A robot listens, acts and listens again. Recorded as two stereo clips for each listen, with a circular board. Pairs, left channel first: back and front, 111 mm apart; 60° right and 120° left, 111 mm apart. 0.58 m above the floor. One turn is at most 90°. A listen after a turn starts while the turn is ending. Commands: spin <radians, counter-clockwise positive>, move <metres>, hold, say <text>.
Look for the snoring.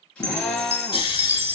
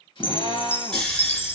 spin -1.57
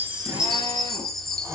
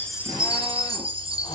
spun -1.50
spin -0.96
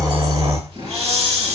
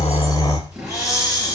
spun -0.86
say Found it: snoring, straight ahead.